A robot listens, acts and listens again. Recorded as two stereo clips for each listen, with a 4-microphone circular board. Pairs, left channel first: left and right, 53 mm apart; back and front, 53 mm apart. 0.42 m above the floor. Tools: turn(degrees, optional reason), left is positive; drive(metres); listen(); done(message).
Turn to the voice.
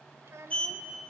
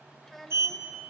turn(degrees=-95, reason="The child speaking: 95° right.")
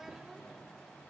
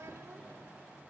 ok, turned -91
listen()
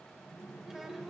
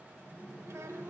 listen()
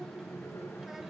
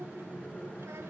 done("I heard a child speaking from this way, but can't make it out now.")